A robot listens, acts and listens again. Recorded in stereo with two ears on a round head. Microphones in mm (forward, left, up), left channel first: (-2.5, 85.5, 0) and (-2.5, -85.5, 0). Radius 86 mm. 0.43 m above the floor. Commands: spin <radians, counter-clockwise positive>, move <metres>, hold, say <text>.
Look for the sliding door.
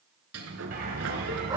spin -1.57
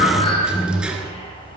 say Facing the sliding door, 1 to 2 m away.